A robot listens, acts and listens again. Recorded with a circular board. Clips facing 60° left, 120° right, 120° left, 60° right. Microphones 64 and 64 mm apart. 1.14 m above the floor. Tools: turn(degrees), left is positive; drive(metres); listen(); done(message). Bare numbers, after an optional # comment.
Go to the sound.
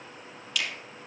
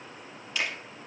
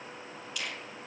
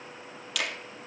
# The finger snap: 60° right.
turn(-60)
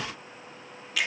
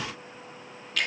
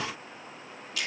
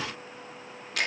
# The finger snap is now 25° right.
turn(-25)
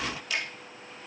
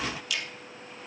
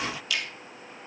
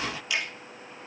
drive(1.0)
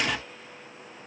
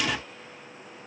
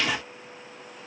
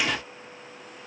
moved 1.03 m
listen()
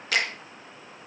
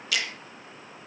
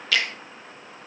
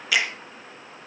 # The finger snap is now 15° left.
turn(15)
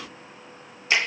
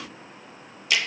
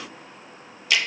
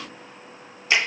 drive(1.0)
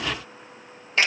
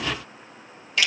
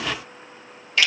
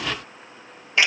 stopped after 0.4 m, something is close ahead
done("Arrived at the finger snap, straight ahead.")